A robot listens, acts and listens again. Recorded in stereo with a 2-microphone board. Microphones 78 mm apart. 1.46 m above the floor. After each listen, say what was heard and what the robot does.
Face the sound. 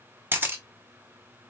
The camera shutter: about 25° right or 155° right. Turn 25° right.
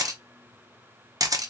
So it is at 125° right. Turn 125° right.
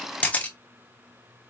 The camera shutter is now 20° left. Turn 20° left.
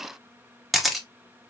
Facing the camera shutter, under 1 m away.